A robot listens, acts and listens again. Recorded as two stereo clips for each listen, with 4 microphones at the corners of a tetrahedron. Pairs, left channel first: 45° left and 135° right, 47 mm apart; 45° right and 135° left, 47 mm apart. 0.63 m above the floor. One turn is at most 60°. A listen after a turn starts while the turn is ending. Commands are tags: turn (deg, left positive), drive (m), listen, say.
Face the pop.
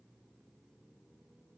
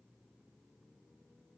<listen/>
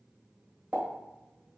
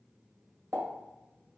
<turn deg="60"/>
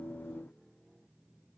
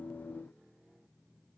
<turn deg="60"/>
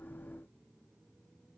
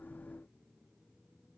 <turn deg="45"/>
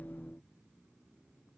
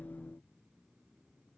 <say>Facing where the pop came from. I can't hear it now.</say>